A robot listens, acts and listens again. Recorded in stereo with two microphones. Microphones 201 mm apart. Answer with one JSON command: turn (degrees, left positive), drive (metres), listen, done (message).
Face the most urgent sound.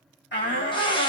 {"turn": 55}
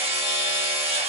{"listen": true}
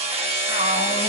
{"listen": true}
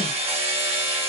{"done": "I heard a shout, but can't make it out now. It was about straight ahead or 70° left."}